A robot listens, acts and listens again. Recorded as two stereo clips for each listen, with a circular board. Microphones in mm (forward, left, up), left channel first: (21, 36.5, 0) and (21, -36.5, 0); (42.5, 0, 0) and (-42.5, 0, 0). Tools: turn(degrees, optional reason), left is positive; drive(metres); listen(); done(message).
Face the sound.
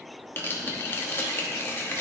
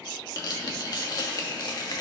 turn(degrees=35, reason="The tearing paper: 35° left.")
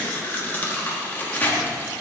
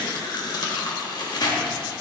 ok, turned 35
turn(degrees=25, reason="The tearing paper is now 25° left.")
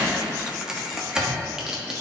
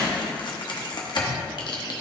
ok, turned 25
turn(degrees=-10, reason="The tearing paper is now 10° right.")
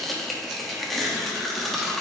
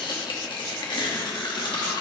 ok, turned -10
done("Facing the tearing paper.")